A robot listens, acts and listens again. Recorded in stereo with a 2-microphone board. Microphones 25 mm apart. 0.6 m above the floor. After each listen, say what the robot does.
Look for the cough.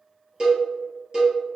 Keep listening.
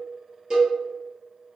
Keep listening.
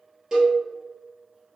I can't make out a cough to turn to.